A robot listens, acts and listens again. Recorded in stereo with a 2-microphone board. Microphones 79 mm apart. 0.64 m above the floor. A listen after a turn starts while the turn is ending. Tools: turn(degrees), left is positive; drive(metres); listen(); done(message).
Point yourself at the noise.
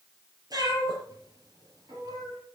turn(degrees=-50)
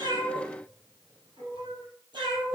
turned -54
turn(degrees=-80)
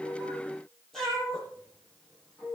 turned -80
done("Facing the cat meowing.")